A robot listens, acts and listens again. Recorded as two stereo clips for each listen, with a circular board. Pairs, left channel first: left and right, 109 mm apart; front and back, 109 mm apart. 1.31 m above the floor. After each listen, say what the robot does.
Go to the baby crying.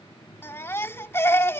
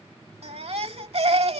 Turn 160° left.
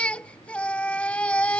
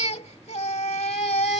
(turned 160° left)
Turn 10° left.
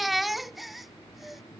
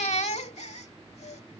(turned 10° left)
Drive 1.0 m forward.
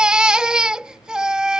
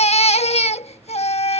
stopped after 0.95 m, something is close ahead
Turn 10° right.
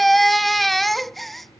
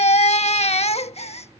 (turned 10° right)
Arrived at the baby crying, straight ahead.